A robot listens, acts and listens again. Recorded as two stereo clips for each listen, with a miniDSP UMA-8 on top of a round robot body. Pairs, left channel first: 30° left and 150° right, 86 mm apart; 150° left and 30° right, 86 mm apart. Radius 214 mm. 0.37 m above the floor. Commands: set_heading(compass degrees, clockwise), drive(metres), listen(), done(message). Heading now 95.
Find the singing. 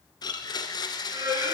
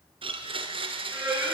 set_heading(190)
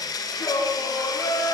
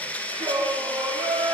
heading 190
set_heading(210)
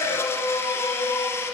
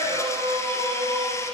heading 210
set_heading(225)
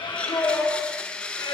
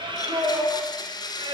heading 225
done("Found it: singing, straight ahead.")